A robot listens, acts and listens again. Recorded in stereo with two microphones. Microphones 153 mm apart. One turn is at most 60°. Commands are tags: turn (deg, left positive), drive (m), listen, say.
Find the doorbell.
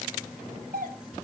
<turn deg="-60"/>
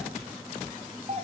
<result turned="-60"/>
<turn deg="-45"/>
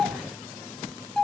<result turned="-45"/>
<say>Found it: a doorbell, straight ahead, 2 to 4 m away.</say>